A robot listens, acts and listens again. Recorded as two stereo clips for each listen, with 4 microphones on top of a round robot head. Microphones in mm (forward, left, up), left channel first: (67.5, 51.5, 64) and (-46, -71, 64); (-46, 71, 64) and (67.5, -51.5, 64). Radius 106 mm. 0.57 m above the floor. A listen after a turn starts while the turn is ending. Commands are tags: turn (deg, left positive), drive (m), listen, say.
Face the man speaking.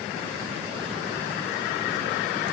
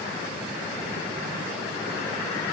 <listen/>
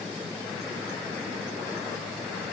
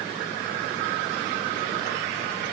<listen/>
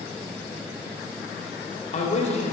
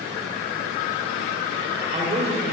<say>Facing the man speaking.</say>